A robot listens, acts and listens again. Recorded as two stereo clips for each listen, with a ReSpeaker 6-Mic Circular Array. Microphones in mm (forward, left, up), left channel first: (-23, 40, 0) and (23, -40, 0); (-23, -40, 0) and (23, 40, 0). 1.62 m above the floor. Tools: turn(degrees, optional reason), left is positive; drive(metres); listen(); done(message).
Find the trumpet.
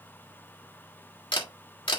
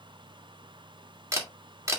listen()
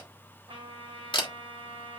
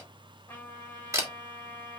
turn(degrees=-50, reason="The trumpet: 50° right.")
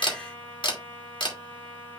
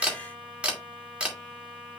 turn(degrees=-25, reason="The trumpet is now 25° right.")
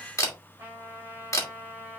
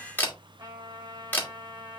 turn(degrees=10, reason="The trumpet is now 10° left.")
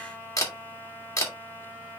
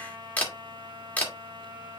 done("Found it: a trumpet, straight ahead.")